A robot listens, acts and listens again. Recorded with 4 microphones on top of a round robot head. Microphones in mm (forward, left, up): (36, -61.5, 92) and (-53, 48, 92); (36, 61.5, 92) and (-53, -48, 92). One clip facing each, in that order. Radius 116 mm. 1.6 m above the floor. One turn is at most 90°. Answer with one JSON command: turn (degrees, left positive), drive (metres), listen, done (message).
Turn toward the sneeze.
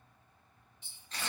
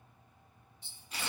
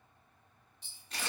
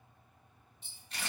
{"listen": true}
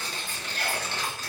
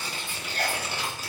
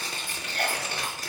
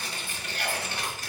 {"turn": 85}
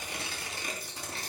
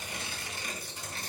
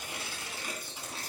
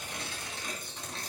{"done": "Facing where the sneeze came from. I can't hear it now."}